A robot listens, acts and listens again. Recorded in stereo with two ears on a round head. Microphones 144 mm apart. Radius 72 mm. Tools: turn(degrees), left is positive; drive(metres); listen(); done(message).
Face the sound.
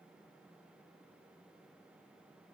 listen()
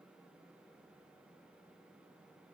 listen()
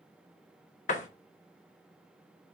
turn(degrees=45)
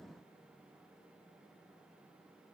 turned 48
listen()
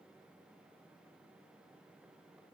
done("I heard a door slam, but can't make it out now. It was about straight ahead or 85° left.")